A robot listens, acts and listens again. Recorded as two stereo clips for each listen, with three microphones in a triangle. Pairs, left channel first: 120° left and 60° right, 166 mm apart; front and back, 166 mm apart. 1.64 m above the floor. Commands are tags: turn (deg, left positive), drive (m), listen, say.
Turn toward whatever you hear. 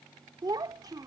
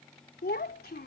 <say>Found it: a child speaking, straight ahead.</say>